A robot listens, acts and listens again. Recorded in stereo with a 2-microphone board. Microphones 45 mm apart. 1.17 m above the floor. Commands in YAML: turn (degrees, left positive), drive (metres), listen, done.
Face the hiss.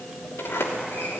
listen: true
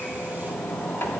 listen: true
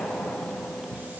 done: "I can't make out a hiss to turn to."